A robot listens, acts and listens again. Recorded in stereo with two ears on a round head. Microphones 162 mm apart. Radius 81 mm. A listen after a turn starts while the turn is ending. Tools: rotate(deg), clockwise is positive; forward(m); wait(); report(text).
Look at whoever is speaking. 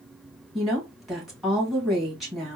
rotate(-30)
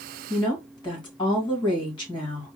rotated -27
rotate(-150)
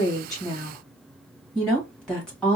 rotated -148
report("Facing the woman speaking.")